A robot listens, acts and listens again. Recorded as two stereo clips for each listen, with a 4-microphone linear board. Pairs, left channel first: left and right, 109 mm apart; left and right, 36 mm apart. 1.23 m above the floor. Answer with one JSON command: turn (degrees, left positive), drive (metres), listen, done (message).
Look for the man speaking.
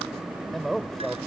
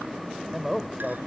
{"turn": 30}
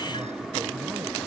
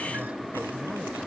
{"listen": true}
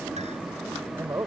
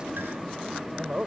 {"turn": -25}
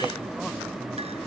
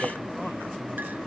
{"listen": true}
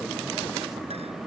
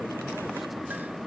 {"listen": true}
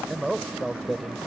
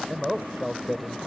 {"done": "Found it: a man speaking, straight ahead."}